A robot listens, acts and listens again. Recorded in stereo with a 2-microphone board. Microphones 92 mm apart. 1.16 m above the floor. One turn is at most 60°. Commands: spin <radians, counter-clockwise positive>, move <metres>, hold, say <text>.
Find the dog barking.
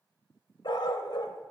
spin 1.05
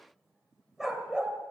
spin -0.17
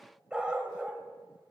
spin -0.26
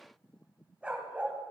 spin -0.35
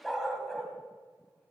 say Found it: a dog barking, straight ahead.